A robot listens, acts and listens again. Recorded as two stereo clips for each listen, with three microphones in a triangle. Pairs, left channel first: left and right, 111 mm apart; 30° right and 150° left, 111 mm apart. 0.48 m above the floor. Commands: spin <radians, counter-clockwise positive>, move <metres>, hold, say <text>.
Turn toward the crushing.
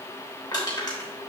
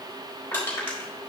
spin 0.61
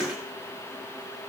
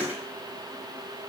hold
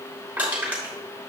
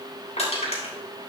spin -0.26
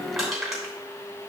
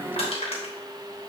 say Found it: crushing, straight ahead, 2 to 4 m away.